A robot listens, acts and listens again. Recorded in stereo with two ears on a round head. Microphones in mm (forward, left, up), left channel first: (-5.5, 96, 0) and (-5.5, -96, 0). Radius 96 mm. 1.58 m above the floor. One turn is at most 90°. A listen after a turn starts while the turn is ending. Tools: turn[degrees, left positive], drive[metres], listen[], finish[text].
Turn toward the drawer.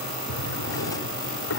Thought: The drawer: about 70° left or 110° left.
Action: turn[70]
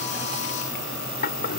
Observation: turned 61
Thought: So it is at 45° left.
Action: turn[45]
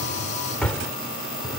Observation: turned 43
Action: finish[Found it: a drawer, straight ahead.]